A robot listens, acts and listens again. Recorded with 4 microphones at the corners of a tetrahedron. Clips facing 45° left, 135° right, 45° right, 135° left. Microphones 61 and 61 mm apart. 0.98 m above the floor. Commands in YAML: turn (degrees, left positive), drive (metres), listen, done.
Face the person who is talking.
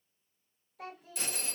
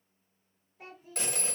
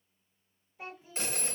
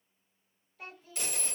turn: 25
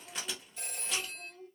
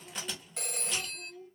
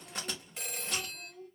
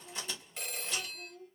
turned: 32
done: "Found it: a child speaking, straight ahead."